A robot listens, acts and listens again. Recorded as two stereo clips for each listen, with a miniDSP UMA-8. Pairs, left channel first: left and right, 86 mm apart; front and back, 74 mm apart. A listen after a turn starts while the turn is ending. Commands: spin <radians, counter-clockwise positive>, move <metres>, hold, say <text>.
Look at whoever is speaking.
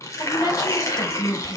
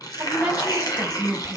spin 1.92
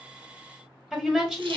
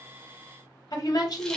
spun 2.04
say Found it: a woman speaking, straight ahead.